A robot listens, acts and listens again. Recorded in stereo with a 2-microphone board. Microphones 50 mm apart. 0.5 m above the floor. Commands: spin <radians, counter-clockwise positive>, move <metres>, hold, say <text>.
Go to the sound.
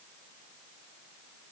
hold
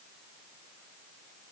hold
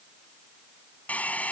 spin 0.52
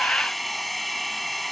move 1.0
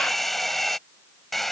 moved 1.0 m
move 1.0
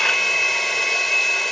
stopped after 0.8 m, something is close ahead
say I am next to the hair dryer.